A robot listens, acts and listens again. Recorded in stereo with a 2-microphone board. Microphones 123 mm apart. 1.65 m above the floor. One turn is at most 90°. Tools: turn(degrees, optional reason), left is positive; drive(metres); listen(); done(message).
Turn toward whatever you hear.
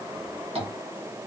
turn(degrees=-50, reason="The tapping: about 50° right or 130° right.")
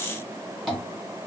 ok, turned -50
done("Found it: tapping, straight ahead.")